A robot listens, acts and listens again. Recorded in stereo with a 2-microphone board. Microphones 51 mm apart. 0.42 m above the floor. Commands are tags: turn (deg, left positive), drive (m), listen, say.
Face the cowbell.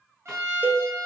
<turn deg="-35"/>
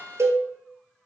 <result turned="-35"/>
<turn deg="-110"/>
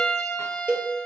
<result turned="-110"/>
<turn deg="-25"/>
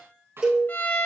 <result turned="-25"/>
<turn deg="-15"/>
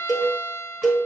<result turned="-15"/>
<say>Found it: a cowbell, straight ahead, 1 to 2 m away.</say>